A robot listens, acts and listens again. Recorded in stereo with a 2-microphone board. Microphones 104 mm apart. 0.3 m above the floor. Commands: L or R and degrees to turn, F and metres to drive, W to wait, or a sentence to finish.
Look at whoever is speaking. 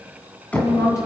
L30
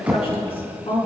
L115
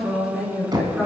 Facing the woman speaking.